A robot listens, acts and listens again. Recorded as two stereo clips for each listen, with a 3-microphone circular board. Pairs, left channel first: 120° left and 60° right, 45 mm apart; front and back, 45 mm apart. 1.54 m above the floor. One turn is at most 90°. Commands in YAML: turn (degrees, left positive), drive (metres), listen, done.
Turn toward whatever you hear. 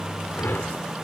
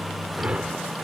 turn: 90
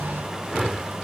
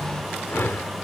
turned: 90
turn: 20
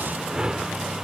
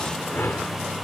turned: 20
turn: 10
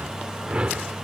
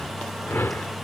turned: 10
done: "Facing the whoosh."